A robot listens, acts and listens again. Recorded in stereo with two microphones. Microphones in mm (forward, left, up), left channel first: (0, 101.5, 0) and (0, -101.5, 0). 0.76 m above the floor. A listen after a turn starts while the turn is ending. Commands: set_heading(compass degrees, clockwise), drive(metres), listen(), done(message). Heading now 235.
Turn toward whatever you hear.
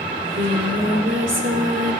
set_heading(325)
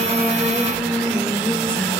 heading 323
done("Facing the singing.")